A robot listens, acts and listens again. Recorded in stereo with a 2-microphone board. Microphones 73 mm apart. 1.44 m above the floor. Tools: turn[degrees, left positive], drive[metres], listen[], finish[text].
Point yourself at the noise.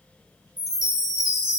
Action: turn[-30]
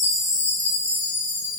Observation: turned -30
Thought: So it is at 145° right.
Action: turn[-145]
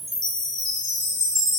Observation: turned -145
Thought: The chime is now 50° right.
Action: turn[-50]
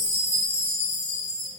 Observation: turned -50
Thought: The chime is now 35° right.
Action: turn[-35]
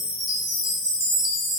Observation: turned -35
Action: finish[Facing the chime.]